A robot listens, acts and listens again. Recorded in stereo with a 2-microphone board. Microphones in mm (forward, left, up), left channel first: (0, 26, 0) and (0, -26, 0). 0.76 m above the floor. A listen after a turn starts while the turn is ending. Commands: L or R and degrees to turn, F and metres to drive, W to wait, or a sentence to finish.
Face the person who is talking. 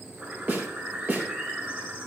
W
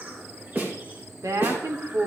R75
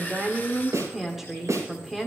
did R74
Found it: a woman speaking, straight ahead, 1 to 2 m away.